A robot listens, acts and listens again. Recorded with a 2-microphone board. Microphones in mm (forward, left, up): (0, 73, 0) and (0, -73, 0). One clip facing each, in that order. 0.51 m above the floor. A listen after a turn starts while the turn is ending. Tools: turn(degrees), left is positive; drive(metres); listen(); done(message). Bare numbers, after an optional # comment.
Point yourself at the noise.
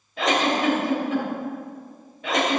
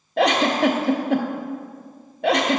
# The giggle: about 60° right or 120° right.
turn(-60)
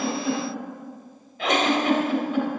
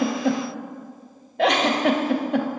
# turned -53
# So it is at 65° right.
turn(-65)
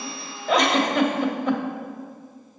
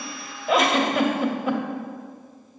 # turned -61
done("Found it: a giggle, straight ahead.")